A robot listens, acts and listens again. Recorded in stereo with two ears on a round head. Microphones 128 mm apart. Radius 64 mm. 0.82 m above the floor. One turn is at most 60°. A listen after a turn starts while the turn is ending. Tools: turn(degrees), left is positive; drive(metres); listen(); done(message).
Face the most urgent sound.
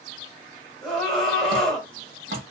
turn(degrees=30)
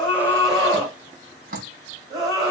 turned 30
turn(degrees=-30)
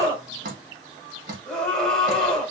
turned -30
done("Facing the scream, 2 to 4 m away.")